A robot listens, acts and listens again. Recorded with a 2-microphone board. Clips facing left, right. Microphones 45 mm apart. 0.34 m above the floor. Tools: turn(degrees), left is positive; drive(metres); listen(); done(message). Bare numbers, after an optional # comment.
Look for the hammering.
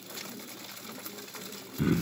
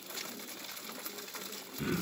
listen()
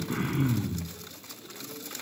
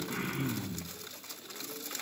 listen()
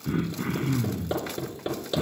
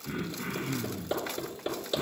turn(30)
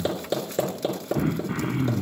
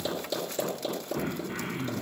# So it is at 135° left.
turn(135)
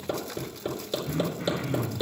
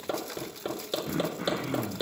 # The hammering is now 15° right.
turn(-15)
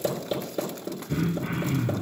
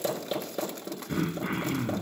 done("Found it: hammering, straight ahead.")